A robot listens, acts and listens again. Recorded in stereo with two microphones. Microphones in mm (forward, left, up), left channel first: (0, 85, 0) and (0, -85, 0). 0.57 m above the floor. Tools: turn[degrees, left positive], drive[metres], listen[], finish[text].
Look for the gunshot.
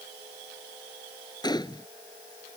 Thought: The gunshot: about 25° left or 155° left.
Action: turn[25]
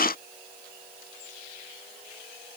Action: listen[]
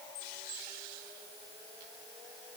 Action: finish[I heard a gunshot, but can't make it out now. It was about straight ahead or 130° left.]